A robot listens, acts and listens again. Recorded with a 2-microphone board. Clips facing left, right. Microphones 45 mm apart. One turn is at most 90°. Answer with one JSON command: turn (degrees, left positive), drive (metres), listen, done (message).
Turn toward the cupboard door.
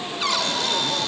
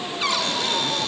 {"turn": -30}
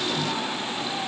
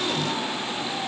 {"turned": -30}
{"listen": true}
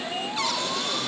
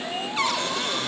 {"turn": -90}
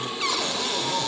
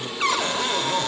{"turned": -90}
{"turn": -40}
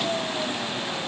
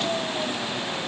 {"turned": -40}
{"listen": true}
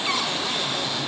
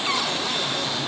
{"done": "Found it: a cupboard door, straight ahead."}